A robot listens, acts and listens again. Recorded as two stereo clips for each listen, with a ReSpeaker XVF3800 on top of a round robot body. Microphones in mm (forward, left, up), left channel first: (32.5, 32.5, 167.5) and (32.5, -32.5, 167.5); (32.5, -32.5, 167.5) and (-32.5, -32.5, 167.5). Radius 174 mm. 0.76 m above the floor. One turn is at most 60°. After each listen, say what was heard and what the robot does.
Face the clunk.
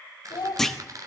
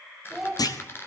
Facing the clunk.